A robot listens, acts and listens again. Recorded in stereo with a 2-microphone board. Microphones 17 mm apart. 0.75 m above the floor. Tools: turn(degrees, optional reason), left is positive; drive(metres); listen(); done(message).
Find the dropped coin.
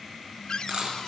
turn(degrees=-45, reason="The dropped coin: about 45° right or 135° right.")
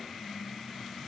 listen()
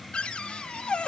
done("I heard a dropped coin, but can't make it out now. It was about straight ahead or 90° right.")